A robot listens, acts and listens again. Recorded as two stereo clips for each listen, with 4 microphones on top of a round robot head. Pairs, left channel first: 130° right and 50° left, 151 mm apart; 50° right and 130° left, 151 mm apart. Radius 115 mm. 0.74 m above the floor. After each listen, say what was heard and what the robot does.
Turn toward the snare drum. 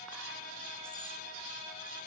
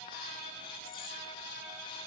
Keep listening.
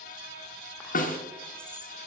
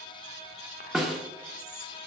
The snare drum: 140° right. Turn 140° right.
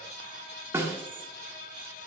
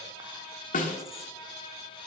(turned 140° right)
The snare drum is now 25° right. Turn 25° right.
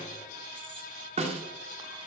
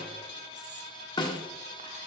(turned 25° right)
The snare drum is now 10° left. Turn 10° left.
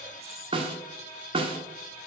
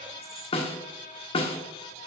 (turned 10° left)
Facing the snare drum, 1 to 2 m away.